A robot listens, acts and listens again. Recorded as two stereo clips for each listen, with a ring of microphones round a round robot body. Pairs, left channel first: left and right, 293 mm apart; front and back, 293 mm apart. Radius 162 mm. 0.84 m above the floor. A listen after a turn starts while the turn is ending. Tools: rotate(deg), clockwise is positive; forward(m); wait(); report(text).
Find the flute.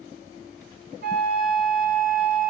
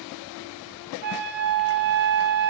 rotate(155)
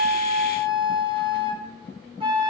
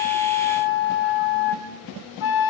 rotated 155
rotate(15)
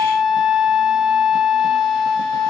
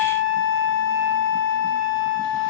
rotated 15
report("Found it: a flute, straight ahead.")